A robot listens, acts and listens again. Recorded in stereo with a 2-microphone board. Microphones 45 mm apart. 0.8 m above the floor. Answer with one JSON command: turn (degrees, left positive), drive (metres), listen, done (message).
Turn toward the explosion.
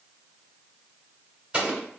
{"turn": -25}
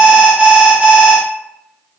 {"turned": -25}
{"listen": true}
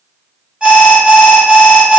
{"done": "I heard an explosion, but can't make it out now. It was about straight ahead or 130° right."}